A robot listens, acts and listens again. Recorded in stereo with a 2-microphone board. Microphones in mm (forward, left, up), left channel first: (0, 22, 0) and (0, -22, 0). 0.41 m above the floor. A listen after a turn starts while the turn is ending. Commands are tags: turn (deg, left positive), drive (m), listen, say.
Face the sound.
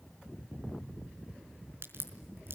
<turn deg="-55"/>
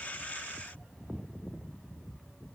<listen/>
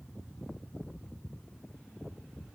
<say>I heard a crack, but can't make it out now. It was about straight ahead or 70° right.</say>